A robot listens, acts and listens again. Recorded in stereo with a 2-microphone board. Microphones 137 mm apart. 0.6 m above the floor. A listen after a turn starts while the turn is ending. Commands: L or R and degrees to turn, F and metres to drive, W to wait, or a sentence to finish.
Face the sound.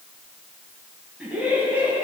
R30
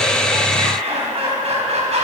R125
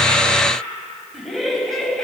Facing the laughter, 2 to 4 m away.